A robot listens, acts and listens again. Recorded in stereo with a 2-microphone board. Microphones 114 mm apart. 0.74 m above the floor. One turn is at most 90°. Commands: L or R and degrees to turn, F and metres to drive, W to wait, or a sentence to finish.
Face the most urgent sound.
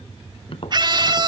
R40
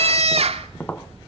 R90
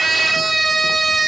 Found it: a scream, straight ahead.